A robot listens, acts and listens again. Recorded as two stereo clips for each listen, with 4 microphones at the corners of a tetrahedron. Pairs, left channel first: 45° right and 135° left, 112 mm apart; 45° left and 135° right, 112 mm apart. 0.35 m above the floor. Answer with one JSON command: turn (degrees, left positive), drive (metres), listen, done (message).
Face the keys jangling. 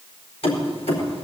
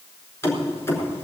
{"turn": -20}
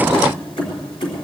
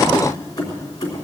{"turn": -10}
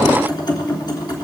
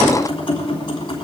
{"done": "Facing the keys jangling, 2 to 4 m away."}